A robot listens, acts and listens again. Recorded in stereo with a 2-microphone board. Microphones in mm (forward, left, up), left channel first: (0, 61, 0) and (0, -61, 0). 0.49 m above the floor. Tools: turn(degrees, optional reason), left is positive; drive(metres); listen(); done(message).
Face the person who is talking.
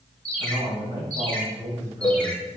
turn(degrees=-30, reason="The man speaking: about 30° right or 150° right.")
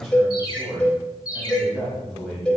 done("Found it: a man speaking, straight ahead.")